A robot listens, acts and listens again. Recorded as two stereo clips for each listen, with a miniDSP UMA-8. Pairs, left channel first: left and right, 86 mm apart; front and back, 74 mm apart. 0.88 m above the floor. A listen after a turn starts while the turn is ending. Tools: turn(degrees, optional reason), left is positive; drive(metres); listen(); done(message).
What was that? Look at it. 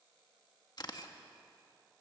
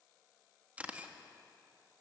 turn(degrees=115, reason="The camera shutter: 115° left.")
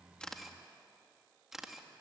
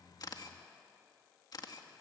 done("Found it: a camera shutter, straight ahead, 1 to 2 m away.")